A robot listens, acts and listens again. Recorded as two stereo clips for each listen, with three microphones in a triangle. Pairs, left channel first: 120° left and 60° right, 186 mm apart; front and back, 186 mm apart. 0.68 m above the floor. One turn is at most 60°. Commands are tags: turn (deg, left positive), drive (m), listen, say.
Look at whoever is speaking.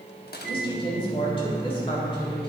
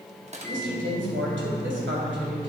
<turn deg="60"/>
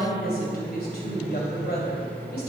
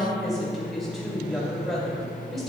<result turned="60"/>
<turn deg="60"/>
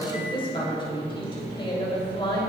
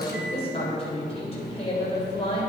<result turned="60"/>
<turn deg="60"/>
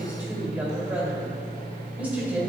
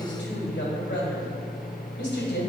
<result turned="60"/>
<turn deg="20"/>
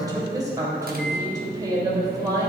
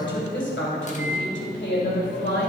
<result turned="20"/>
<turn deg="10"/>
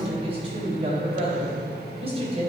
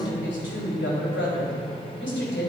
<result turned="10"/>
<say>Found it: a woman speaking, straight ahead.</say>